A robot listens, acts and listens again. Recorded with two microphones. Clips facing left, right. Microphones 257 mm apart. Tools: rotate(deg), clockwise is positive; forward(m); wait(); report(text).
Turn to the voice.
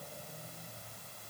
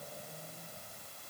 wait()
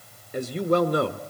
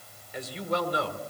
rotate(-55)
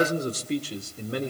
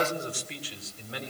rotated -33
rotate(-55)
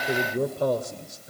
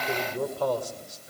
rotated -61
rotate(-25)
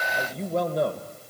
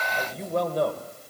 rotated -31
report("Found it: a man speaking, straight ahead, 2 to 4 m away.")